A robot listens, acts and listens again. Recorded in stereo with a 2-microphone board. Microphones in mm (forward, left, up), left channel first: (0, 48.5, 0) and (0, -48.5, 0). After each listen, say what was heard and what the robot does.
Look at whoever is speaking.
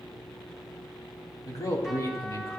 The man speaking: about 40° left or 140° left. Turn 40° left.
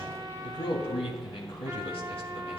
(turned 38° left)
So it is at 105° left. Turn 105° left.
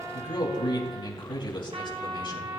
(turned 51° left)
The man speaking is now 55° left. Turn 55° left.
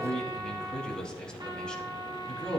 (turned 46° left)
The man speaking is now 10° left. Turn 10° left.
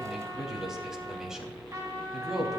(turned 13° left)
Found it: a man speaking, straight ahead, 2 to 4 m away.